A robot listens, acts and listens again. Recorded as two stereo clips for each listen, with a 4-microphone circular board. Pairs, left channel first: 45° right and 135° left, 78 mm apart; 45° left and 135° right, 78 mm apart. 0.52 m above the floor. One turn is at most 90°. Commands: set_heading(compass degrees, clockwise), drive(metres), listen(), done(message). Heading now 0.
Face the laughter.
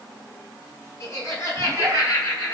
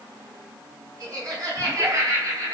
set_heading(90)
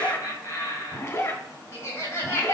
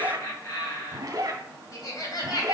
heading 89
set_heading(79)
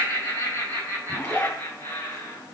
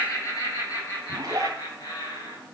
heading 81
set_heading(71)
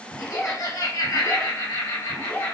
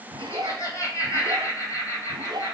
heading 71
done("Found it: laughter, straight ahead.")